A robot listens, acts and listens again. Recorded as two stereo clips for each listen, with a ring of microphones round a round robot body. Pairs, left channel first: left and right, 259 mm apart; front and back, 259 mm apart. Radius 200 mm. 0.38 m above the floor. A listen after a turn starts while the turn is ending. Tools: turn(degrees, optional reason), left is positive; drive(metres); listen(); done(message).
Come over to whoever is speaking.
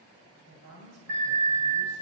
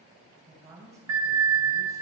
turn(degrees=-100, reason="The woman speaking: 100° right.")
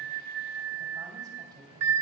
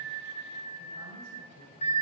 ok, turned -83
turn(degrees=-15, reason="Nothing new. It was at 15° right.")
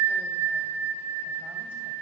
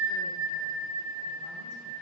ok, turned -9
turn(degrees=-10, reason="Nothing new. It was at 10° right.")
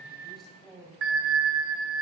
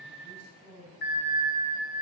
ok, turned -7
drive(metres=1.0)
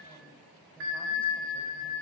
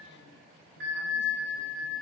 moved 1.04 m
listen()
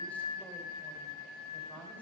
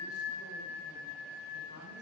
listen()
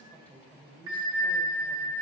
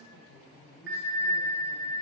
drive(metres=1.0)
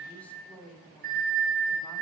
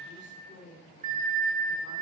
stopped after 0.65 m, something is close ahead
done("Arrived at the woman speaking, straight ahead.")